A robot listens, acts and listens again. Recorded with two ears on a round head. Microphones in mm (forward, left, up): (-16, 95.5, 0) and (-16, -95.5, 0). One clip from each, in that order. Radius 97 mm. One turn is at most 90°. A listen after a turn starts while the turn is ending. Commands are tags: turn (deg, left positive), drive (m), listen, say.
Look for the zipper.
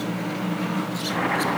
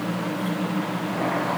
<listen/>
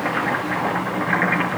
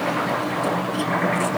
<listen/>
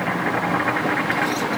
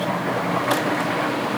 <say>I can't make out a zipper to turn to.</say>